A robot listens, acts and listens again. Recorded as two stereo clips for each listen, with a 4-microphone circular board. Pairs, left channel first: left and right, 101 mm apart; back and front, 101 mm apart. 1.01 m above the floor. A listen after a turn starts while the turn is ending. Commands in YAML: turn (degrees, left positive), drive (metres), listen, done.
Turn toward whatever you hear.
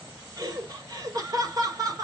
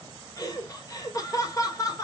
turn: -135
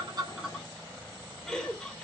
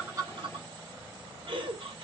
turn: 10
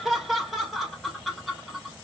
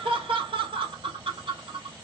done: "Found it: laughter, straight ahead, 1 to 2 m away."